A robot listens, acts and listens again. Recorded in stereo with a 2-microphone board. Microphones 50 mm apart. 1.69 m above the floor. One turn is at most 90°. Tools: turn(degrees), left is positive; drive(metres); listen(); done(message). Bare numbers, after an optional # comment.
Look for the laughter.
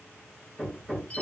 listen()
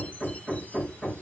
listen()
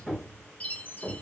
done("I can't make out laughter, only hammering and a chime.")